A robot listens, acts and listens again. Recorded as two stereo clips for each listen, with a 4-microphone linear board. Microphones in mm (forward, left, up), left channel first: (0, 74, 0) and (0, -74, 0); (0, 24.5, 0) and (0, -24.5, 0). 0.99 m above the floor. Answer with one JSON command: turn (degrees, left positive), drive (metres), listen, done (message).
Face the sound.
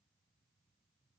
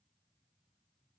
{"listen": true}
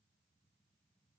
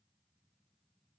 {"listen": true}
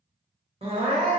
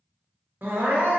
{"turn": -40}
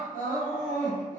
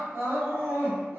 {"turn": -90}
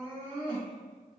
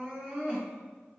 {"turn": -35}
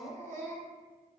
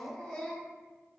{"turn": 20}
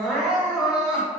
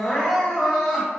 {"done": "Facing the crying."}